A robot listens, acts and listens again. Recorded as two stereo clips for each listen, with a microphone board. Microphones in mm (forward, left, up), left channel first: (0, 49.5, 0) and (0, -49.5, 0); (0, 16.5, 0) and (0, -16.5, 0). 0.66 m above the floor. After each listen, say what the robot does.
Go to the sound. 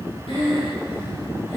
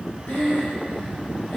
Turn 75° left.
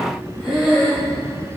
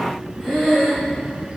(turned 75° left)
Drive 1.0 m forward.
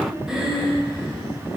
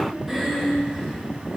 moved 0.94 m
Drive 1.0 m forward.
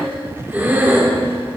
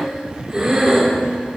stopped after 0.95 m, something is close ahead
Turn 20° right.
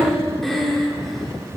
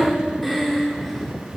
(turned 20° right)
I am next to the breathing.